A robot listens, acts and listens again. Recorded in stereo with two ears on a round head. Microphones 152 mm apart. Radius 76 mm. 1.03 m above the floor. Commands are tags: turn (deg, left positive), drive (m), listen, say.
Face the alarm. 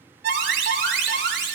<turn deg="-90"/>
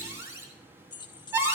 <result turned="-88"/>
<turn deg="-15"/>
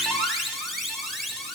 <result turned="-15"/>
<say>Found it: an alarm, straight ahead.</say>